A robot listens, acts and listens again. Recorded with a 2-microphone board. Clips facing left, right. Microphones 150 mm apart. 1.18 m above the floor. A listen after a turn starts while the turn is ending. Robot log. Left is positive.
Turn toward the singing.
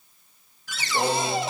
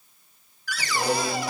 note: The singing: about 35° left or 145° left.
cmd yaw +35
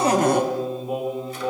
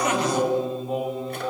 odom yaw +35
note: So it is at 15° left.
cmd yaw +15
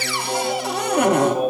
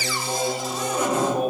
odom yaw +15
note: The singing is now 10° left.
cmd yaw +10
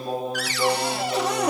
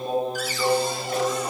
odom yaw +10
note: The singing is now 10° left.
cmd yaw +10
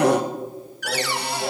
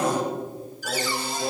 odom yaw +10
note: The singing is now 10° left.
cmd yaw +10
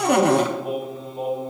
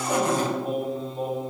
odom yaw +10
end: Facing the singing.